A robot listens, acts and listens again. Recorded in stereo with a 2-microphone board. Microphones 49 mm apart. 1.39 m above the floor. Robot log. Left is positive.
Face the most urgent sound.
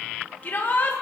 note: The shout: about 40° left or 140° left.
cmd yaw +40
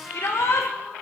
note: So it is at 100° left.
cmd yaw +100
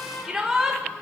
note: The shout is now 10° right.
cmd yaw -10
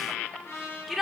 end: Found it: a shout, straight ahead, 1 to 2 m away.